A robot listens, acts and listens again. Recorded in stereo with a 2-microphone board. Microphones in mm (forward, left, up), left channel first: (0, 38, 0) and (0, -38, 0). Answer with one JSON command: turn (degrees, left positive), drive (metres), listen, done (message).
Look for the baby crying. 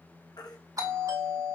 {"turn": 65}
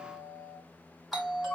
{"listen": true}
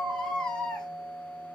{"turn": 15}
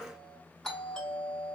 {"listen": true}
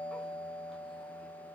{"listen": true}
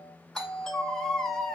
{"done": "Found it: a baby crying, straight ahead."}